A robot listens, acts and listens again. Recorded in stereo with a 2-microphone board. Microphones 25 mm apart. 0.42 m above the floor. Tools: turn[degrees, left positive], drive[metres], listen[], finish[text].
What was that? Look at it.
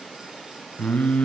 Action: turn[90]
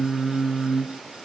Thought: So it is at 20° right.
Action: turn[-20]
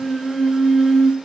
Action: finish[Facing the singing.]